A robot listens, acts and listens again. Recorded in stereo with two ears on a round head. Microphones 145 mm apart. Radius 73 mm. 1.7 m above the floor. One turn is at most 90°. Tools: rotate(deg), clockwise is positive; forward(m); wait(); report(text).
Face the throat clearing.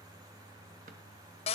wait()
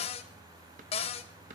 wait()
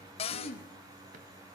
rotate(-50)
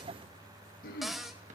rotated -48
rotate(-75)
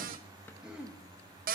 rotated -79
report("Facing the throat clearing.")